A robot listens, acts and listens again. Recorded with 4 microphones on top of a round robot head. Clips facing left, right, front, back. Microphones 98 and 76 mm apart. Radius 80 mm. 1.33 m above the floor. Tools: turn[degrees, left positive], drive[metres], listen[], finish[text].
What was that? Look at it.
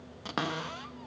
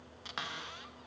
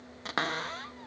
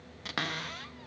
Thought: The cupboard door: 50° left.
Action: turn[50]
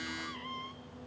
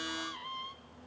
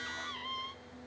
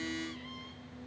Thought: The cupboard door is now 15° right.
Action: turn[-15]
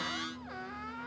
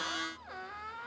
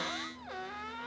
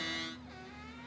Action: finish[Facing the cupboard door.]